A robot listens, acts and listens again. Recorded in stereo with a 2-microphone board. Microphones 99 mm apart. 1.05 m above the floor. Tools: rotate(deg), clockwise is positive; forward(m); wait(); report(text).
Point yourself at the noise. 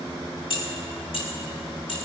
rotate(-65)
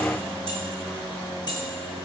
rotate(-50)
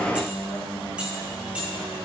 wait()
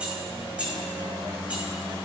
rotate(15)
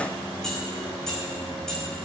report("Facing the keys jangling.")